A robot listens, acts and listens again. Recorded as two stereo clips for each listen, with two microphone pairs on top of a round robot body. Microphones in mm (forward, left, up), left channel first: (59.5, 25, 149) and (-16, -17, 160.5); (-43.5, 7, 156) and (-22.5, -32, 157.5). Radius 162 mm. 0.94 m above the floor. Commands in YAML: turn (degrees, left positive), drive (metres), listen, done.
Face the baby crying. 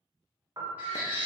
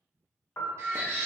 turn: -80
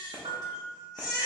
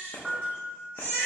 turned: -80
turn: -15
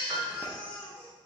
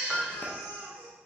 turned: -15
done: "Found it: a baby crying, straight ahead."